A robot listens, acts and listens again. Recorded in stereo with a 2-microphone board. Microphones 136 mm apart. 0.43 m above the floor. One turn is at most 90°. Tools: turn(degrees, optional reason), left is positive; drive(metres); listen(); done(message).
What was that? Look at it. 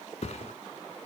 turn(degrees=50, reason="The thud: about 50° left or 130° left.")
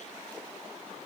listen()
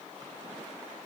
done("I heard a thud, but can't make it out now. It was about straight ahead or 80° left.")